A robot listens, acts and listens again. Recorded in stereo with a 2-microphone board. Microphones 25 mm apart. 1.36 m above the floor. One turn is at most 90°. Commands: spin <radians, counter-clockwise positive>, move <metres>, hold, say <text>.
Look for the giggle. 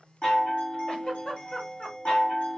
spin 0.79
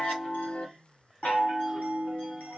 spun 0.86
hold
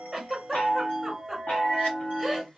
say Found it: a giggle, straight ahead.